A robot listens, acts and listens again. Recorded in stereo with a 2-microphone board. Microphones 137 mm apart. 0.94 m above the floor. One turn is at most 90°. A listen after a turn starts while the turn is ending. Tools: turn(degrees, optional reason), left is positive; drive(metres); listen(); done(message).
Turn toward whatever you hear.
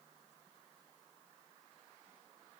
listen()
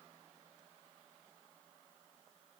listen()
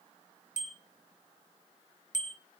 turn(degrees=65, reason="The bicycle bell: about 65° left or 115° left.")
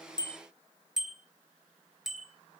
done("Facing the bicycle bell, 2 to 4 m away.")